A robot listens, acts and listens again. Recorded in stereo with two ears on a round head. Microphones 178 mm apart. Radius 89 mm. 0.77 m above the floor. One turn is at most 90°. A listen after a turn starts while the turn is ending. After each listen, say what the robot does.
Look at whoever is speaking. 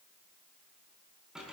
Keep listening.
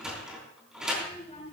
Turn 30° left.
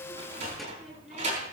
Facing the child speaking, over 4 m away.